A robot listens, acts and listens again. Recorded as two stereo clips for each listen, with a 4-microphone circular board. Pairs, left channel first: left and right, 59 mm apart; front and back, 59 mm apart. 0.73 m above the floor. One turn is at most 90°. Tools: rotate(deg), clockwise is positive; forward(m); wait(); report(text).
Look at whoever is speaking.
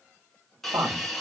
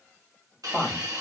rotate(75)
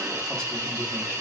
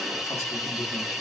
wait()
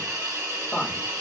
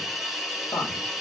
rotate(-15)
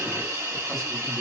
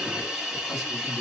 wait()
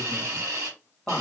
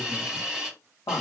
report("Found it: a woman speaking, straight ahead.")